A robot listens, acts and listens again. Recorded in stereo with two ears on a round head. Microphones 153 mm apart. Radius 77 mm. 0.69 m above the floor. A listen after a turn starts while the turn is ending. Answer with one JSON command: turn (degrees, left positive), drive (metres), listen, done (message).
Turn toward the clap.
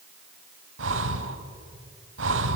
{"listen": true}
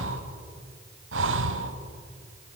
{"listen": true}
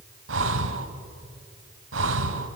{"done": "I can't make out a clap, only breathing."}